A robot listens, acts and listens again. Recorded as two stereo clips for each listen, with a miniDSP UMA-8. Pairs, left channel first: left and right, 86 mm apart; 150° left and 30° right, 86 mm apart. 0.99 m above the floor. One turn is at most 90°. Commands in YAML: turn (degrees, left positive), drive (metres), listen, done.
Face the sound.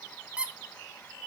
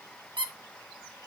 turn: -15
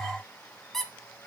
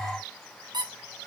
done: "Facing the squeak."